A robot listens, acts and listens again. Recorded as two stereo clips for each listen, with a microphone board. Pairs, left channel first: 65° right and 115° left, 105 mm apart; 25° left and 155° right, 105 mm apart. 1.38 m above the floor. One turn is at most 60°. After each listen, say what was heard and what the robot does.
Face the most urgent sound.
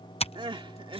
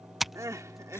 The crying: 145° left. Turn 60° left.
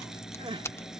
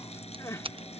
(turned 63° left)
The crying is now 85° left. Turn 60° left.
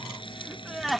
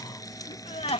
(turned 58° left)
The crying is now 25° left. Turn 25° left.
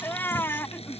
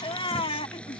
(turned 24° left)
Found it: crying, straight ahead.